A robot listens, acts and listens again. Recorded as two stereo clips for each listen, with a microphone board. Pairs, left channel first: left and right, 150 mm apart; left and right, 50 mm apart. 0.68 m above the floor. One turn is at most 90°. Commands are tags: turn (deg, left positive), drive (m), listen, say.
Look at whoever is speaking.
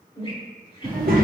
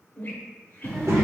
<turn deg="-70"/>
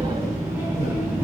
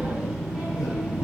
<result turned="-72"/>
<turn deg="-15"/>
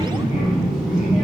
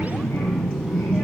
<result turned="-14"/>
<say>Facing the child speaking.</say>